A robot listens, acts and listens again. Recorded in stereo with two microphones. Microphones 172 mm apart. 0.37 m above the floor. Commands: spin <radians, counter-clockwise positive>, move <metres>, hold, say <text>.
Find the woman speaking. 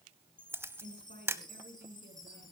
spin -1.22
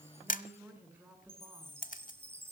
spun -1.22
spin -0.17
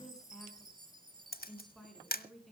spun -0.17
say Found it: a woman speaking, straight ahead.